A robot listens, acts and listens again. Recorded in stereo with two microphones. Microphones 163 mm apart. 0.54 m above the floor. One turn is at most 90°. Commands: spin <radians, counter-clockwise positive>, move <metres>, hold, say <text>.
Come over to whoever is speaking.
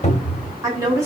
spin -0.35
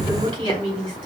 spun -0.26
spin -1.57
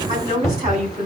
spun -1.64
spin -0.87
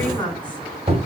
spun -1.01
spin 0.17
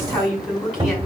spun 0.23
move 1.0
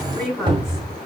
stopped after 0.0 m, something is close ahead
say Something is in my way. I am facing the woman speaking but have not reached it.